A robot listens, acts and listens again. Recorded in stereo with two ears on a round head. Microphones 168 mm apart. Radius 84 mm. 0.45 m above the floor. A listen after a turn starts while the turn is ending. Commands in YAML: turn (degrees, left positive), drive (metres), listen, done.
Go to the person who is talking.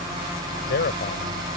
turn: 60
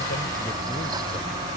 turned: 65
listen: true
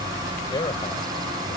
turn: 30
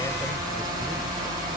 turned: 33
listen: true
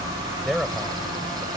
drive: 1.0
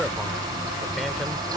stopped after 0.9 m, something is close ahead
listen: true
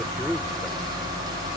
listen: true
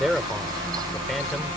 done: "I am next to the man speaking."